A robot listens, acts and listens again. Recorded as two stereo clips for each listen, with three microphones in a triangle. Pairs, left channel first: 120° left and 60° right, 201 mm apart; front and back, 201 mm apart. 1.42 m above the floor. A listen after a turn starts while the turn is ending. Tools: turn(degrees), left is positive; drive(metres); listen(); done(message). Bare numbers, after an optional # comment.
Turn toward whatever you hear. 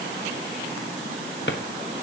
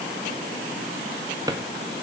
# The drawer: 110° left.
turn(110)
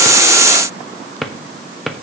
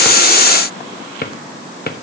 # The drawer is now 30° left.
turn(30)
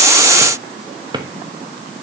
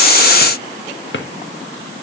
# The drawer is now 10° left.
turn(10)
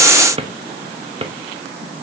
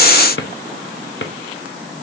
done("Facing the drawer, 1 to 2 m away.")